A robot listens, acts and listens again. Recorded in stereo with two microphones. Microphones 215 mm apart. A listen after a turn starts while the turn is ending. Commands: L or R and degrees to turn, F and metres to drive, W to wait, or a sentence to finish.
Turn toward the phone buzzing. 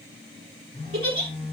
L25
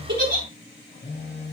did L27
L125
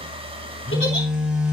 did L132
Facing the phone buzzing, over 4 m away.